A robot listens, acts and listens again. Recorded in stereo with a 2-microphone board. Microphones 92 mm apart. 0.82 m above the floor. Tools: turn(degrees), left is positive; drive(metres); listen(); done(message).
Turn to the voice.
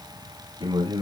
turn(degrees=-60)
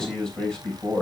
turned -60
turn(degrees=10)
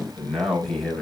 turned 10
done("Found it: a man speaking, straight ahead.")